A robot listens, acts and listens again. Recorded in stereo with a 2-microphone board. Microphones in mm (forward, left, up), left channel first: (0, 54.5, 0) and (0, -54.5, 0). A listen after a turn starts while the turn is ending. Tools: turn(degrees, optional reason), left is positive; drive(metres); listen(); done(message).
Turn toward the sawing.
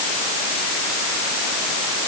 listen()
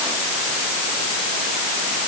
listen()
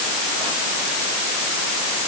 done("I can't make out sawing.")